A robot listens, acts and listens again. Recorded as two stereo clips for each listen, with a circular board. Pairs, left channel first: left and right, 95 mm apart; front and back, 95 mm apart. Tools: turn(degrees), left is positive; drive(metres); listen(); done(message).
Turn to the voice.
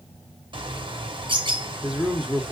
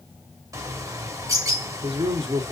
turn(degrees=-170)
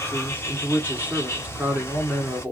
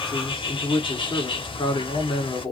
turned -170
turn(degrees=-20)
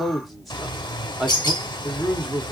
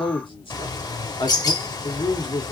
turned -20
done("Found it: a man speaking, straight ahead.")